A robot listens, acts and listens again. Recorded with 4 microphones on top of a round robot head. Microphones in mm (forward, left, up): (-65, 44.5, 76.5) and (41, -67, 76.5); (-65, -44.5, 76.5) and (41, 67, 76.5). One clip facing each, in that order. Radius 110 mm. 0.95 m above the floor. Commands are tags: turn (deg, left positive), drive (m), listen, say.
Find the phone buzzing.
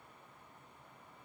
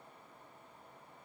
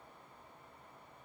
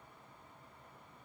<listen/>
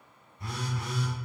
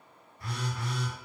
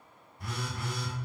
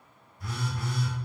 <turn deg="-155"/>
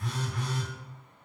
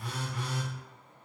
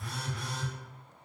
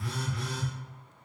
<turn deg="35"/>
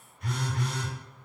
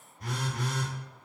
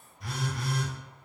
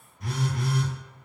<turn deg="10"/>
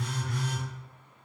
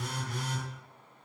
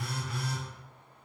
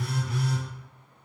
<say>Facing the phone buzzing.</say>